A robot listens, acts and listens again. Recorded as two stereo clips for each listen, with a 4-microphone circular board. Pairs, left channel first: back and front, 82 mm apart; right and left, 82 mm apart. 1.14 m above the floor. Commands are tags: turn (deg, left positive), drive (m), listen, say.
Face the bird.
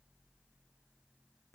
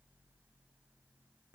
<listen/>
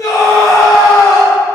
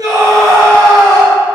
<listen/>
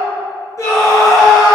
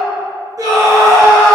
<say>I can't make out a bird, only a scream.</say>